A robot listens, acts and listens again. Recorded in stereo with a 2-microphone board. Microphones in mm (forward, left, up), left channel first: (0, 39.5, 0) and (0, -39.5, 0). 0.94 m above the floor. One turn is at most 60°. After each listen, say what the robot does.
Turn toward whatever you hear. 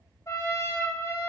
Turn 45° left.
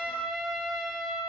Facing the trumpet.